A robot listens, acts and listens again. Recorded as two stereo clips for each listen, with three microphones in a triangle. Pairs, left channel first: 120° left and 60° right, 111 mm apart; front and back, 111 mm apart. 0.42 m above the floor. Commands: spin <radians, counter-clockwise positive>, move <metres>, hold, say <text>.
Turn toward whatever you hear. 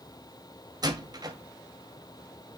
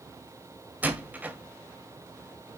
spin -1.83
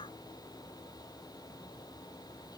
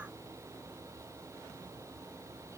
say I heard a door slam from this way, but can't make it out now.